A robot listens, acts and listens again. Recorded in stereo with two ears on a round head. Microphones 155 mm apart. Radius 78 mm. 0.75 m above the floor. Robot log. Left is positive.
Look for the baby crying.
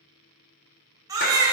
note: The baby crying: about 20° right or 160° right.
cmd yaw -20
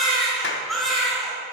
end: Found it: a baby crying, straight ahead, 2 to 4 m away.